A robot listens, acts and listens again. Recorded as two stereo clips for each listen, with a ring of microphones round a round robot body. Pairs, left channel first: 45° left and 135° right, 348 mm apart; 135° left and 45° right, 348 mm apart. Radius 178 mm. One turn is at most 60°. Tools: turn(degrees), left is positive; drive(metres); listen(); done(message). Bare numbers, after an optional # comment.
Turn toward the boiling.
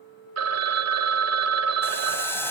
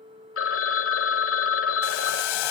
# The boiling: 130° left.
turn(60)
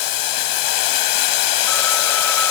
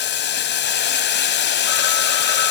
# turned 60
# The boiling is now 75° left.
turn(60)
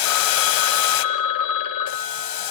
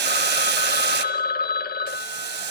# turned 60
# The boiling is now 15° left.
turn(15)
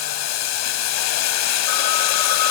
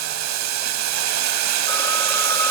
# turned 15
done("Facing the boiling, 1 to 2 m away.")